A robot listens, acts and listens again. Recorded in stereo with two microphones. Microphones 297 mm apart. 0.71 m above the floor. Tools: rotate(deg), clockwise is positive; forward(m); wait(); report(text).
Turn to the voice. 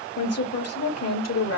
rotate(-65)
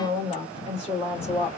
rotate(-25)
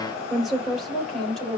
report("Found it: a woman speaking, straight ahead, 2 to 4 m away.")